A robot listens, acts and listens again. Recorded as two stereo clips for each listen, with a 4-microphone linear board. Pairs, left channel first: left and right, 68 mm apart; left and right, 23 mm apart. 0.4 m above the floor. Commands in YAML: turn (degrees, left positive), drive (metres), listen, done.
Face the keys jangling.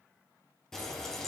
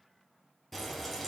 listen: true
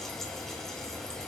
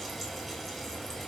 listen: true
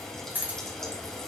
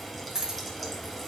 turn: -25
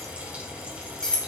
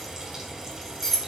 turn: 15
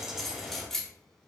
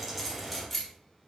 done: "Found it: keys jangling, straight ahead."